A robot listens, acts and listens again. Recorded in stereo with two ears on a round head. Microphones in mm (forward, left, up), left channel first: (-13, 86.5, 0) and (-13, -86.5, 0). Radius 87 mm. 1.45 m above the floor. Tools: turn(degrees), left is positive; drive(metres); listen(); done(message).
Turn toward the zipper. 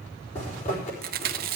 turn(degrees=35)
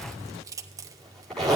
done("Found it: a zipper, straight ahead, over 4 m away.")